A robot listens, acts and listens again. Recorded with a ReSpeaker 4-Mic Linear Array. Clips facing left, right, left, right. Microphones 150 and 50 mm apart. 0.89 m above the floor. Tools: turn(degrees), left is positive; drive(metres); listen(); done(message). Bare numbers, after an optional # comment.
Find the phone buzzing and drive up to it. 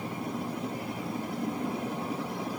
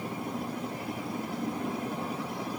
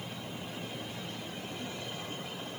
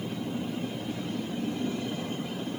listen()
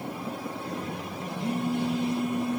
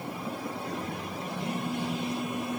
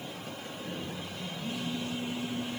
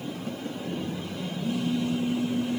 # The phone buzzing: about 40° left or 140° left.
turn(40)
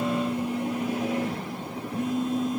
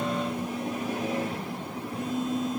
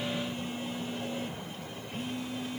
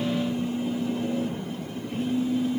# So it is at 105° left.
turn(105)
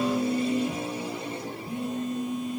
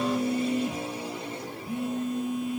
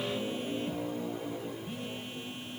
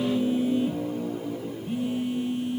# The phone buzzing is now 10° right.
turn(-10)
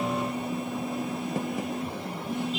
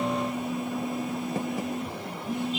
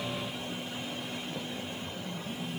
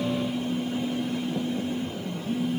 drive(1.0)
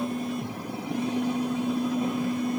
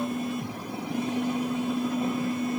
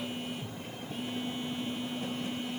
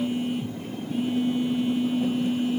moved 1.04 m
drive(1.0)
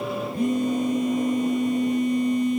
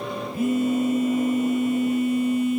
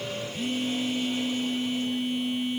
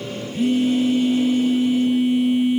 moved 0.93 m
drive(1.0)
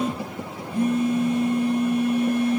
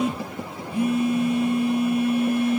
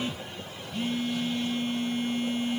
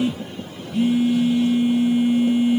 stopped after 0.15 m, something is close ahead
# The phone buzzing is now 10° right.
turn(-10)
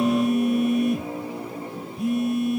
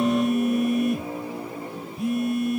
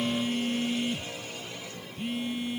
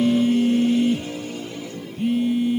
done("I am next to the phone buzzing.")